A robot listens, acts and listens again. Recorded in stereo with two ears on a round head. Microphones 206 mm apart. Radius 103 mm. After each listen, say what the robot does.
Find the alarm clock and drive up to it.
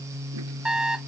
Turn 30° right.
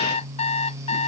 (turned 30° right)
Turn 30° left.
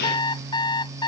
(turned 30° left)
Turn 20° left.
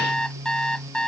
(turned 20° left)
Drive 1.0 m forward.
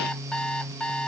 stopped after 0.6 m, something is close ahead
Blocked. The alarm clock is further on, straight ahead.